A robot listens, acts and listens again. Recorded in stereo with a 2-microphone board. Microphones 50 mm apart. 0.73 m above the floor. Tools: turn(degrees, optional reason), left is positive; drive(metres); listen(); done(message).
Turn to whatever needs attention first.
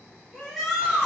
turn(degrees=30)
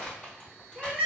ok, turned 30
turn(degrees=-25, reason="So it is at 25° right.")
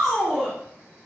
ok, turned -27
done("Found it: a shout, straight ahead, 1 to 2 m away.")